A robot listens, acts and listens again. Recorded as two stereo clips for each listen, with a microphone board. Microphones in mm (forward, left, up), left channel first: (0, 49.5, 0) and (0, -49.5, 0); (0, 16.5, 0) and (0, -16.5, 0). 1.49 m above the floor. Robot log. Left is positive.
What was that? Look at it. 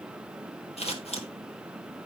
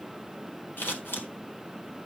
cmd yaw +90
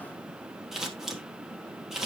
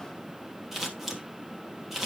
end: Facing the scissors.